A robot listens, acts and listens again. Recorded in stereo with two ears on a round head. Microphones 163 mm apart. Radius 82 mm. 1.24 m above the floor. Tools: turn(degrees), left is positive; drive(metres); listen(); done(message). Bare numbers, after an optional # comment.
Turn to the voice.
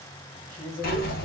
# The man speaking: about 35° left or 145° left.
turn(35)
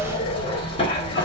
listen()
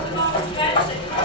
listen()
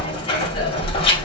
done("I heard a man speaking, but can't make it out now. It was about straight ahead or 110° left.")